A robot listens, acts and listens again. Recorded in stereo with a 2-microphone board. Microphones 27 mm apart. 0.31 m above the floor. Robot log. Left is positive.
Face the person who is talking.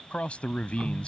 note: The man speaking: about 55° left or 125° left.
cmd yaw +55
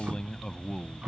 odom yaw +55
note: So it is at 40° left.
cmd yaw +40
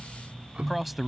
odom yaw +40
end: Found it: a man speaking, straight ahead.